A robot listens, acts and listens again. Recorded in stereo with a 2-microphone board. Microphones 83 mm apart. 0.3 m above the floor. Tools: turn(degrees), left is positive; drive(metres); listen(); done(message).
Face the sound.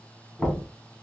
turn(degrees=30)
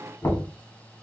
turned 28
turn(degrees=145)
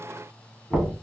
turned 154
turn(degrees=-10)
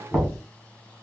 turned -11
done("Found it: knocking, straight ahead.")